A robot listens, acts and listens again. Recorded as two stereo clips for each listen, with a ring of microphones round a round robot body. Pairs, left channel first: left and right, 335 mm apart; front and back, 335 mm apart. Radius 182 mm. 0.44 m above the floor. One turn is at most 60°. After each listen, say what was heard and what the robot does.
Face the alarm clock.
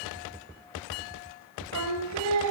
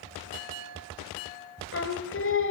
Keep listening.
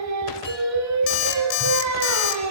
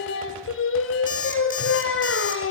The alarm clock: 70° left. Turn 60° left.
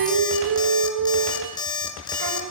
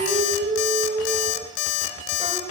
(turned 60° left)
The alarm clock is now 10° left. Turn 10° left.
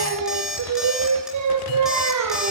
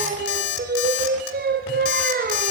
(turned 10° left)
Found it: an alarm clock, straight ahead, 2 to 4 m away.